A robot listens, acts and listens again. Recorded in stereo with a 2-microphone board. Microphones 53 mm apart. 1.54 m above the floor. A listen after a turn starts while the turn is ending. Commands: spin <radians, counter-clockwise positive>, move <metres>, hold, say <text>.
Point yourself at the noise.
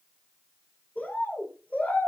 spin 0.52
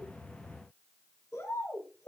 spin 2.01
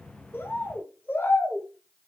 spin 0.70
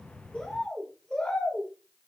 spin 0.26
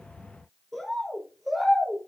say Facing the bird, over 4 m away.